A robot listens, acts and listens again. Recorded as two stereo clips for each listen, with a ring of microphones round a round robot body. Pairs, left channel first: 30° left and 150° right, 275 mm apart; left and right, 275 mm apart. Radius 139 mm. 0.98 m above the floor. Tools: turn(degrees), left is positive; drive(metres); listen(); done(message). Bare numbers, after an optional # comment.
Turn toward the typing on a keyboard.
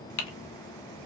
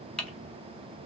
done("Facing the typing on a keyboard.")